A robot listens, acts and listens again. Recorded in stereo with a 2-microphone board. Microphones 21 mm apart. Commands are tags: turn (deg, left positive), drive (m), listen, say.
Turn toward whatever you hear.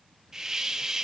<turn deg="-25"/>
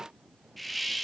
<say>Found it: a hiss, straight ahead, under 1 m away.</say>